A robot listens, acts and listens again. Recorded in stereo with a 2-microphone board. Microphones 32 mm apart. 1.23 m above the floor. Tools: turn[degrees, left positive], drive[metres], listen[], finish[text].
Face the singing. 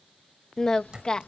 Thought: The singing: about 25° left or 155° left.
Action: turn[25]
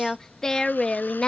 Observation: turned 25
Thought: The singing: about 25° left or 155° left.
Action: turn[25]
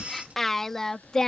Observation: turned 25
Thought: The singing: about 15° left or 165° left.
Action: turn[15]
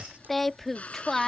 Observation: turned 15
Action: turn[30]
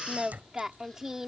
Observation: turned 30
Thought: So it is at 15° right.
Action: turn[-15]
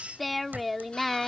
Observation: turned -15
Action: finish[Facing the singing.]